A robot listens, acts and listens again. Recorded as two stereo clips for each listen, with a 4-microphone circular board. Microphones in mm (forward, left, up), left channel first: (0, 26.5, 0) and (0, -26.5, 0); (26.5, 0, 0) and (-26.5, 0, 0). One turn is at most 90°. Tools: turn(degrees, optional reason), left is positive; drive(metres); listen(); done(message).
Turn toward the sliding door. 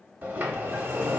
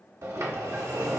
turn(degrees=-90, reason="The sliding door: 145° right.")
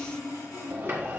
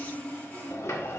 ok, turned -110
turn(degrees=-35, reason="The sliding door is now 35° right.")
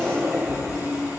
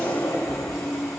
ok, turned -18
turn(degrees=-20, reason="The sliding door is now 20° right.")
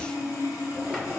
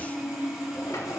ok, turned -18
done("Found it: a sliding door, straight ahead, under 1 m away.")